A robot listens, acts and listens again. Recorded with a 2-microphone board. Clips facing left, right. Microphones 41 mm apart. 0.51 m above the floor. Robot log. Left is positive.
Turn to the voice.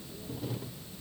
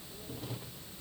cmd idle
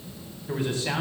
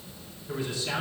note: The man speaking: about 50° left or 130° left.
cmd yaw +50
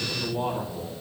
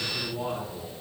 note: So it is at 75° left.
cmd yaw +75
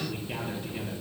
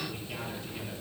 note: The man speaking is now 35° left.
cmd yaw +35
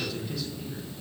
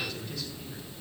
end: Found it: a man speaking, straight ahead.